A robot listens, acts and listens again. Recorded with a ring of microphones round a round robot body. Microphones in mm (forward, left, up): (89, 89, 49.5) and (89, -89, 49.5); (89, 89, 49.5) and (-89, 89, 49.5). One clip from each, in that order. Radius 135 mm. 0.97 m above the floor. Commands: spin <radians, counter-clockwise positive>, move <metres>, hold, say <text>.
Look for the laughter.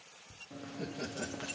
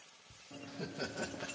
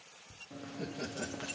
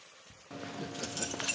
spin -2.01
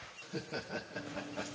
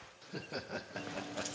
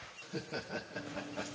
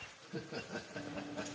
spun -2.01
spin -1.13
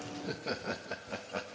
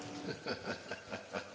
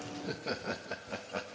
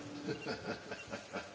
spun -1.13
say Found it: laughter, straight ahead, 1 to 2 m away.